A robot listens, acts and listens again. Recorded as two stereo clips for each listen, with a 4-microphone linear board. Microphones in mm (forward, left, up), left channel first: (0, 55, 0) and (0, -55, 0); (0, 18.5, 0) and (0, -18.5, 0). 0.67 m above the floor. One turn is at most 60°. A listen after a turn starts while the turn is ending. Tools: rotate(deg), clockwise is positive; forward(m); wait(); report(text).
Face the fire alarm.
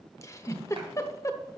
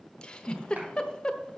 wait()
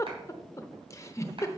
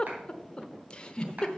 wait()
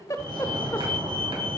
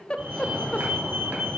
rotate(50)
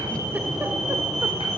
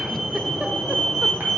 report("Facing the fire alarm, 2 to 4 m away.")